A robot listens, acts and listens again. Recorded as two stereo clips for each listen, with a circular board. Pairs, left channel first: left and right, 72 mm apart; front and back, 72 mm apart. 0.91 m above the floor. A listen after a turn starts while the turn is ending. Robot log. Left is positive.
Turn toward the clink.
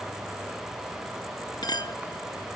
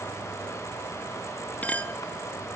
note: The clink: 70° left.
cmd yaw +70
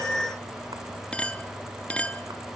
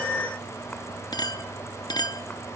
note: The clink is now 20° left.
cmd yaw +20
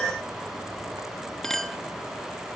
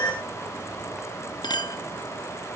end: Facing the clink, under 1 m away.